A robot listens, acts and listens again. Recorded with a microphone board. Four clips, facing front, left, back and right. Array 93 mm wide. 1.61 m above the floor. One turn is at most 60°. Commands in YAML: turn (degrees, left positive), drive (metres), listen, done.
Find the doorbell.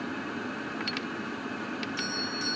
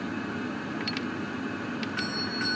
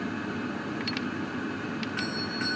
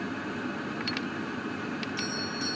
turn: 60
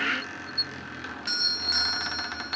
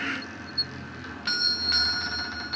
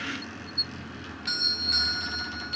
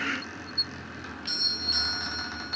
turn: 60
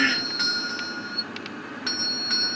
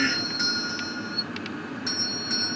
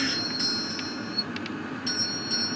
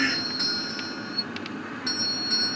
turn: 15
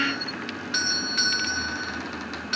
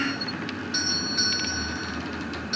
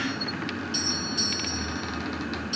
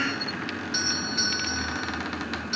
done: "Found it: a doorbell, straight ahead."